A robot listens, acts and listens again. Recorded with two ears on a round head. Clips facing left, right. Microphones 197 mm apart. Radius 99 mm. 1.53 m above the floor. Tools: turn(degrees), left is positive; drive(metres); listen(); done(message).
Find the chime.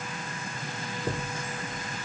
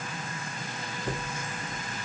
turn(degrees=65)
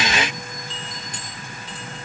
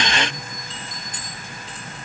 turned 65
turn(degrees=55)
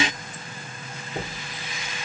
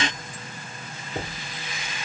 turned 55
done("Facing the chime.")